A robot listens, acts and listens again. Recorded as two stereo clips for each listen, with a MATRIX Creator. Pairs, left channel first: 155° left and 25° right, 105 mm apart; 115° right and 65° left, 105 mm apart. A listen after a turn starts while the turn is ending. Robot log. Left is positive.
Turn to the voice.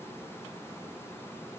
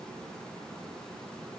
cmd idle
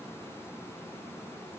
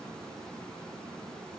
cmd idle
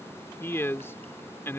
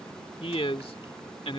note: The man speaking: 135° right.
cmd yaw -135
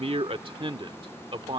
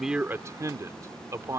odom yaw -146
note: The man speaking is now 10° left.
cmd yaw +10
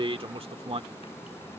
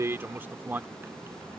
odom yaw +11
end: Found it: a man speaking, straight ahead.